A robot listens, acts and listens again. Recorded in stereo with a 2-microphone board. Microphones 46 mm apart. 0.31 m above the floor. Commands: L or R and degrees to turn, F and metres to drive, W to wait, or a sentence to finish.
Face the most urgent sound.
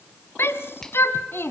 L60
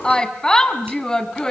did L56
L15
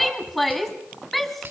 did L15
Facing the shout, 2 to 4 m away.